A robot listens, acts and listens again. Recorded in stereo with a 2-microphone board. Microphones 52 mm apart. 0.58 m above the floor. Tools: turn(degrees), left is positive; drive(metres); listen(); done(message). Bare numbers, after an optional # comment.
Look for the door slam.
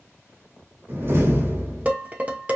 # The door slam: about 45° right or 135° right.
turn(-45)
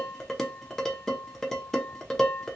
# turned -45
listen()
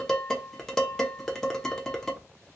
done("I heard a door slam, but can't make it out now. It was about straight ahead or 90° right.")